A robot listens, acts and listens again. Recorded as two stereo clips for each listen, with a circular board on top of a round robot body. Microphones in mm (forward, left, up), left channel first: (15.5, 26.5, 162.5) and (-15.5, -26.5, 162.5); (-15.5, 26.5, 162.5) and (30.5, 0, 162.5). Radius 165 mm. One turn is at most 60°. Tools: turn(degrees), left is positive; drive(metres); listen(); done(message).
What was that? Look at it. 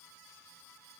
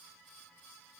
listen()
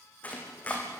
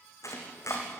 turn(degrees=60)
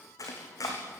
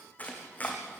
turn(degrees=60)
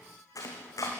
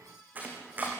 turn(degrees=30)
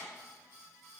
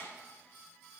listen()
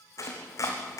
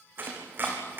turn(degrees=25)
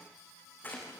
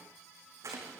done("Found it: chopping, straight ahead.")